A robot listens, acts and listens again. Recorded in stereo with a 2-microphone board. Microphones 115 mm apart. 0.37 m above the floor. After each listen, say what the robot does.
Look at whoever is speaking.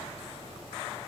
Keep listening.
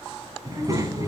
Turn 30° right.
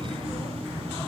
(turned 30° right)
Turn 115° right.
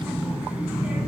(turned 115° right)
Turn 10° right.
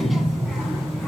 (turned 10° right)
Facing the child speaking, 2 to 4 m away.